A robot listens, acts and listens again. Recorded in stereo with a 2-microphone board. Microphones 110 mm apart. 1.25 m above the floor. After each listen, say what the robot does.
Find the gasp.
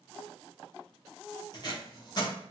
Keep listening.
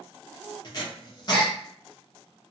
Turn 30° left.
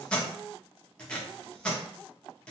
Keep listening.
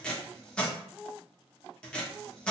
I heard a gasp, but can't make it out now. It was about 25° right or 145° left.